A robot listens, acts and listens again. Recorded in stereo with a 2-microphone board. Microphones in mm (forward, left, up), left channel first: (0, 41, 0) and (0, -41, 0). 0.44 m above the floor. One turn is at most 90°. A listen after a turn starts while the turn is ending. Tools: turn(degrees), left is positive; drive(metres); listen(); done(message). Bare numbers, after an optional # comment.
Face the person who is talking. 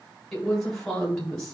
turn(30)
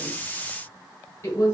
# So it is at 145° left.
turn(90)
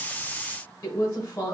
# The woman speaking is now 50° left.
turn(50)
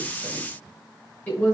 # The woman speaking is now 25° left.
turn(25)
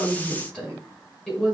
# The woman speaking is now 10° left.
turn(10)
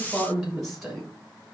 done("Found it: a woman speaking, straight ahead.")